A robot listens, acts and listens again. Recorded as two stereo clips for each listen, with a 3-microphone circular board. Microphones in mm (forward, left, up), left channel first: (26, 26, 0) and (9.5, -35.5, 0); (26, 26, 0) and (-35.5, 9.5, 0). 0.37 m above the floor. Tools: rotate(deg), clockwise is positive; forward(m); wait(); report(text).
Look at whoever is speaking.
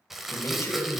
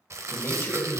rotate(-45)
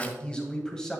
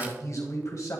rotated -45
report("Found it: a man speaking, straight ahead, 1 to 2 m away.")